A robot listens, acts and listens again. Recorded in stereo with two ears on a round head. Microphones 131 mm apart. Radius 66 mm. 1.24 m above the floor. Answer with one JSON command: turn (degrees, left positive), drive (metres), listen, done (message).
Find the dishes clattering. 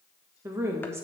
{"listen": true}
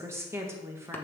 {"listen": true}
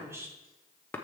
{"done": "I can't make out dishes clattering to turn to."}